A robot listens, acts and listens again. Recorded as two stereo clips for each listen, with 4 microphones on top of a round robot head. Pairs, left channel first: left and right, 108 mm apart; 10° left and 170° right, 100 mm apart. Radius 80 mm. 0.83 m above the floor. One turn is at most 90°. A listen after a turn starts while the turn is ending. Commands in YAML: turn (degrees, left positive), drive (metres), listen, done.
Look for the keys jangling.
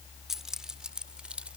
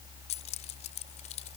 turn: -10
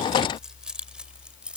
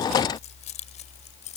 turn: -10
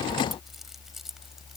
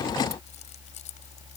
listen: true
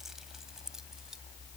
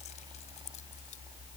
listen: true
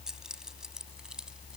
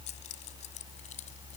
done: "I heard keys jangling from this way, but can't make it out now."